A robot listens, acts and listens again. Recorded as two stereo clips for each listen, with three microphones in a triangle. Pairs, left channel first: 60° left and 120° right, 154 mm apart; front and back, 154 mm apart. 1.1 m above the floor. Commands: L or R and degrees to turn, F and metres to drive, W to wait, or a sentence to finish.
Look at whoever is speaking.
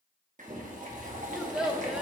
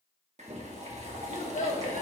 R35
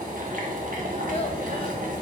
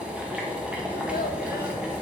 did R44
L10
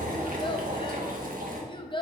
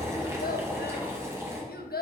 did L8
Found it: a child speaking, straight ahead, 1 to 2 m away.